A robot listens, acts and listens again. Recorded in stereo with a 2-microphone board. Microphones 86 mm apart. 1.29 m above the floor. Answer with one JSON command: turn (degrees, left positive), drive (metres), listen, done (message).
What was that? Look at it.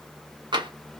{"turn": -65}
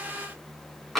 {"done": "Found it: tapping, straight ahead, 1 to 2 m away."}